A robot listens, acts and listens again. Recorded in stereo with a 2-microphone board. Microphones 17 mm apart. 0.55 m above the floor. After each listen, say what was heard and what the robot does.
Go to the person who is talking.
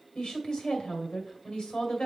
The woman speaking: about 65° left or 115° left. Turn 65° left.
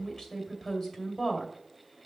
So it is at 40° left. Turn 40° left.
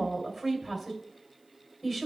Drive 1.0 m forward.
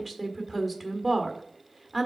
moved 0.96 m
Drive 1.0 m forward.
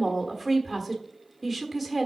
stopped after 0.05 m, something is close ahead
Arrived at the woman speaking, straight ahead.